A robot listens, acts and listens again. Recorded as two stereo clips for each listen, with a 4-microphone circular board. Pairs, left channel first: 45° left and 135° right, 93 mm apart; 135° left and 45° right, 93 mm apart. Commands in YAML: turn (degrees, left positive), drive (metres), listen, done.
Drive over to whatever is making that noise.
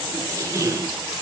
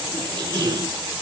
turn: -85
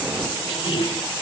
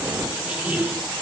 turn: 30
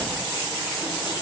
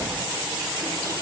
listen: true
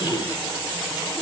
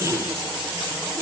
turn: 10
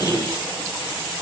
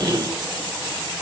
drive: 1.0
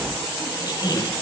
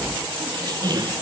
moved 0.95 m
drive: 1.0
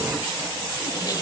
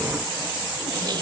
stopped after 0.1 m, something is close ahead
listen: true
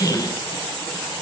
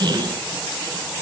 done: "I am next to the squeak."